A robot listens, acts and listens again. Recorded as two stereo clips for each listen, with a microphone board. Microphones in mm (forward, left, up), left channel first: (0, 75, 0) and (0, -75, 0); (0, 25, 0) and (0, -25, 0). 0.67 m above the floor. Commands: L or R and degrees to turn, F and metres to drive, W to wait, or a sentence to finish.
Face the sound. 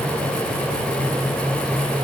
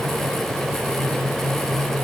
W
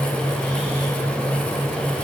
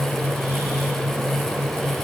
W
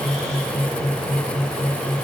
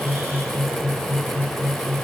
I can't make out anything.